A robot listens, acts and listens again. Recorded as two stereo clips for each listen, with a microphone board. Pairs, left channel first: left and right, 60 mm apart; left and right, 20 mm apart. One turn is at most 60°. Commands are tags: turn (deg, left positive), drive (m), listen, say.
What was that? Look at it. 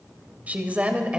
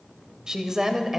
<turn deg="-20"/>
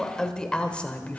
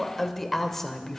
<turn deg="25"/>
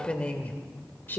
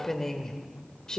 <turn deg="35"/>
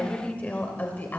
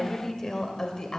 <turn deg="30"/>
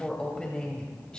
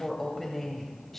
<turn deg="15"/>
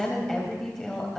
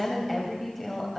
<say>Found it: a woman speaking, straight ahead.</say>